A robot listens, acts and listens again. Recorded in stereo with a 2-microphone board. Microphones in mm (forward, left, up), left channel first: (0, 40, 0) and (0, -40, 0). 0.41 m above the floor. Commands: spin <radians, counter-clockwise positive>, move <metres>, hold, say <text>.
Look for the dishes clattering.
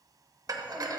spin -0.87
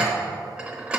spin -0.26
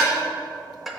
say Facing the dishes clattering.